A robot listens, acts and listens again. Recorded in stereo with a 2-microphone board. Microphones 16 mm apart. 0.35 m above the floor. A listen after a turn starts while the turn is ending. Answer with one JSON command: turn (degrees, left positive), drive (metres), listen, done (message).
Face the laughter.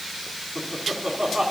{"turn": -20}
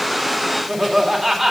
{"turn": -30}
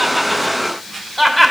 {"turn": 10}
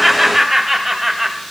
{"turn": -10}
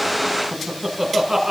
{"turn": -15}
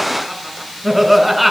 {"done": "Facing the laughter, 1 to 2 m away."}